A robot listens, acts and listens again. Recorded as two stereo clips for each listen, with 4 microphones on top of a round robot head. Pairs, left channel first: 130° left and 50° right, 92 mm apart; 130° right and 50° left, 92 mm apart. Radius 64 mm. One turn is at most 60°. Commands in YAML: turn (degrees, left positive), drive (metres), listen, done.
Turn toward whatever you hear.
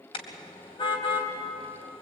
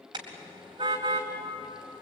turn: 60
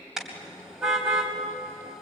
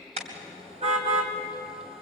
turn: 35
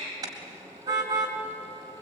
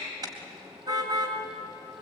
done: "Facing the car horn."